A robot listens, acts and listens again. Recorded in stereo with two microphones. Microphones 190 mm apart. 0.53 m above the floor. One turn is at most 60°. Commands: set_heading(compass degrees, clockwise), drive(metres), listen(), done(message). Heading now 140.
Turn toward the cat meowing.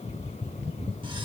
listen()
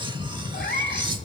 set_heading(80)
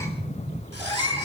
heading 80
set_heading(60)
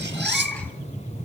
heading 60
done("Facing the cat meowing, over 4 m away.")